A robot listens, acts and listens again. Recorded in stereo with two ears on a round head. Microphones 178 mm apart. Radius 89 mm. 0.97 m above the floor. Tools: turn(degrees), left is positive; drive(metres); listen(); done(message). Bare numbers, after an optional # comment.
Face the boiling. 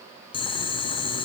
# The boiling: about 25° left or 155° left.
turn(25)
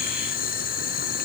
# So it is at 130° left.
turn(130)
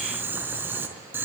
# The boiling is now 10° right.
turn(-10)
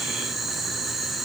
done("Found it: boiling, straight ahead, over 4 m away.")